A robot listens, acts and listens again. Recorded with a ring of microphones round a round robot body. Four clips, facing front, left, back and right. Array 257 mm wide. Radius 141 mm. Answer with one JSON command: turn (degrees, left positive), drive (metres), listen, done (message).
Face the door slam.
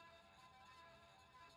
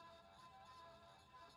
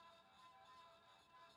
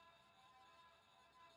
{"listen": true}
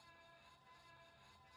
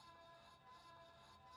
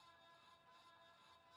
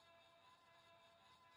{"listen": true}
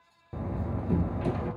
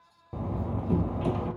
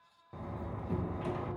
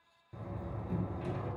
{"turn": 55}
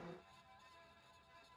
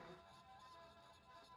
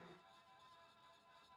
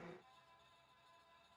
{"done": "Facing where the door slam came from. I can't hear it now."}